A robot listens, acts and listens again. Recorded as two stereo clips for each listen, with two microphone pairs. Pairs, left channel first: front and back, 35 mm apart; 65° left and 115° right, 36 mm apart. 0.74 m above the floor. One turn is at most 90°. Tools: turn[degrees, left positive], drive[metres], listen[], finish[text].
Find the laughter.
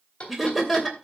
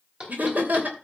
Thought: The laughter: 95° right.
Action: turn[-90]
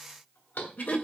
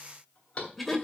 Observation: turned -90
Thought: The laughter is now 30° right.
Action: turn[-30]
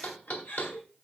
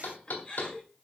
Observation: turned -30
Action: finish[Facing the laughter.]